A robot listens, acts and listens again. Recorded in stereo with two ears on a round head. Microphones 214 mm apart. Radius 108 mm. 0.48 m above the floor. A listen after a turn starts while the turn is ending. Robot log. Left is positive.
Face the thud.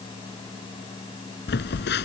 cmd idle
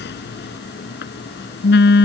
cmd idle
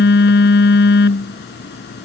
end: I can't make out a thud, only a phone buzzing.